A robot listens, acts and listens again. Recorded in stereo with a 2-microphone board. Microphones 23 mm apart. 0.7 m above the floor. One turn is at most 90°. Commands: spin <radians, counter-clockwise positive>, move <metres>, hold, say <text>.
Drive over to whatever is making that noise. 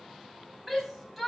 spin -0.52
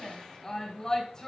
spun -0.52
spin 0.44
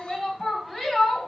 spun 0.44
move 1.0
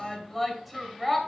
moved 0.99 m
move 1.0
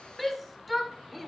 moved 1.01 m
move 1.0
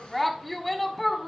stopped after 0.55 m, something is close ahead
say Arrived at the shout, straight ahead.